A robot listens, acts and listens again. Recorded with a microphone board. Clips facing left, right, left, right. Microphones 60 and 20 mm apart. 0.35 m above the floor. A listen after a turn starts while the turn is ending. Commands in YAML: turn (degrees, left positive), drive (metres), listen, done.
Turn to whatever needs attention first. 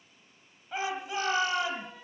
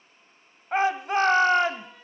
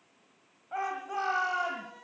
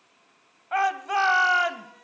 turn: -55
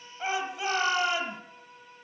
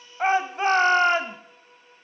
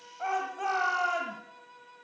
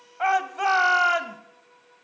turn: -55
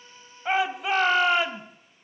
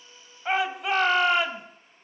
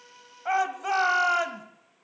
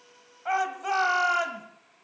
done: "Facing the shout."